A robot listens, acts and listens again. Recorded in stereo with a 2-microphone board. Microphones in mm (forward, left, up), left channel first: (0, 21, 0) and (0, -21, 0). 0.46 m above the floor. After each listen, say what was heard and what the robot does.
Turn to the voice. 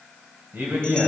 The man speaking: about 60° right or 120° right. Turn 60° right.
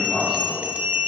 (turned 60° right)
Found it: a man speaking, straight ahead, 2 to 4 m away.